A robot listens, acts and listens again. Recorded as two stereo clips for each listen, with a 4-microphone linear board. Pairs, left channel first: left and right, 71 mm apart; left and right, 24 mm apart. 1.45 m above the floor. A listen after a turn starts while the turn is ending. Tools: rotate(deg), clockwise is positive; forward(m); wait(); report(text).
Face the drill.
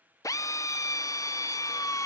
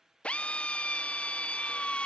rotate(-50)
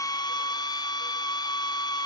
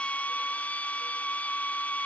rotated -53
rotate(-75)
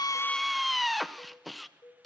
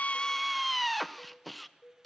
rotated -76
report("Facing the drill, 1 to 2 m away.")